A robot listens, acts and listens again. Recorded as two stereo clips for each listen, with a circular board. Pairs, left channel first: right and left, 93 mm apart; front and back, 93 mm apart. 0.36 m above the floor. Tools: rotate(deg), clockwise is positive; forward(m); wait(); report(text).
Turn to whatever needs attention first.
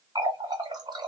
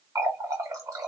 wait()
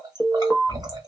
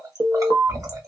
rotate(160)
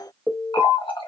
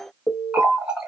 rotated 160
rotate(30)
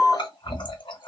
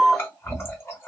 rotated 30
rotate(-10)
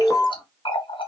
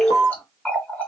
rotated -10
report("Found it: an alarm, straight ahead, 1 to 2 m away.")